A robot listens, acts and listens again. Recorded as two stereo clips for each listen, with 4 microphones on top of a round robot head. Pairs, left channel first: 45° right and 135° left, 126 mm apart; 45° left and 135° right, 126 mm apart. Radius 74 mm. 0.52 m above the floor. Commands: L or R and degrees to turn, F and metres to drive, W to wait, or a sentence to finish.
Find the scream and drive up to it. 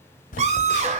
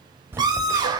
L165
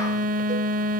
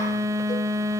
W
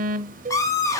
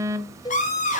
L25
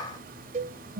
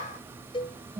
L15
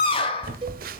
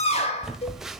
F1.0
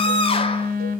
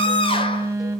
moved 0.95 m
F1.0
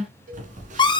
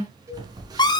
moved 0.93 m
F1.0
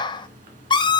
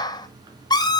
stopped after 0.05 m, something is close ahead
I am next to the scream.